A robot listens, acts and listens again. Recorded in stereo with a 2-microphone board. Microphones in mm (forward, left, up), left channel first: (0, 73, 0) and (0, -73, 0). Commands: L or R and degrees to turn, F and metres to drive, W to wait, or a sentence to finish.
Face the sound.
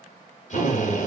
L60
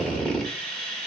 Found it: a drill, straight ahead, under 1 m away.